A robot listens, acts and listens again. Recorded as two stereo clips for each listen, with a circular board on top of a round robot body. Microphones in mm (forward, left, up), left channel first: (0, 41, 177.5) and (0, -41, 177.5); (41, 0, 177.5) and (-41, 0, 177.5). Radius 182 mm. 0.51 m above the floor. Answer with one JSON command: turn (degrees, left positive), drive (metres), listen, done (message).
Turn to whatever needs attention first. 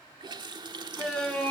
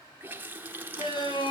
{"turn": 15}
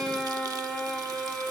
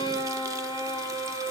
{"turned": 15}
{"done": "Found it: a shout, straight ahead."}